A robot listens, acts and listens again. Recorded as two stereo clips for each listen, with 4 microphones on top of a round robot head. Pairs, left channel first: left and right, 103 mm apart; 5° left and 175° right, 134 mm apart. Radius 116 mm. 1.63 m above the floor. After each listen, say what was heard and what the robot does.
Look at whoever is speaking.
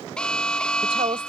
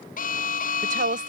The woman speaking: 145° right. Turn 145° right.
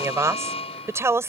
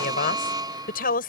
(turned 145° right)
The woman speaking is now 25° right. Turn 25° right.
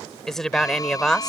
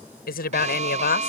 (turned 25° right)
Found it: a woman speaking, straight ahead.